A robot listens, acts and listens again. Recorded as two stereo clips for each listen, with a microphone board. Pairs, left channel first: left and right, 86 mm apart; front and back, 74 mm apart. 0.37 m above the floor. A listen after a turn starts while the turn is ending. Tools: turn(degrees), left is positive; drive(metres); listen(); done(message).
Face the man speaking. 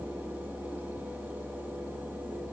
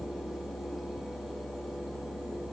listen()
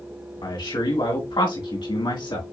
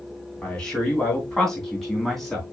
turn(degrees=85)
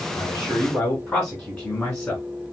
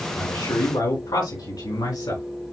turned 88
turn(degrees=10)
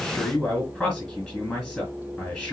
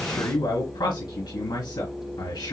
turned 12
done("Found it: a man speaking, straight ahead.")